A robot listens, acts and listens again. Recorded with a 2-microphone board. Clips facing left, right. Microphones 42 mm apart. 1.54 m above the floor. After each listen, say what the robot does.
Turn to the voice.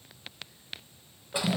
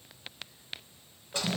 Keep listening.
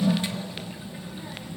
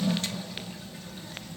Turn 30° left.
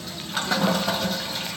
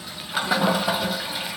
Turn 120° left.
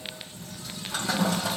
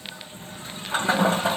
Turn 15° right.
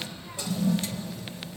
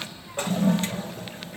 Facing the child speaking.